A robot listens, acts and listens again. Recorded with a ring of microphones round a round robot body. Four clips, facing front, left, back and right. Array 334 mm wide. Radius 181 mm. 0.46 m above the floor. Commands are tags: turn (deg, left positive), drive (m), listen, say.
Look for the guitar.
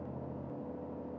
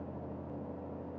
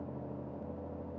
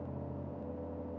<listen/>
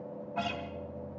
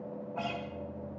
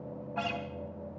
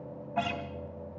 <turn deg="-100"/>
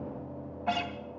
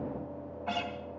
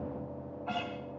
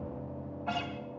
<say>Facing the guitar, 2 to 4 m away.</say>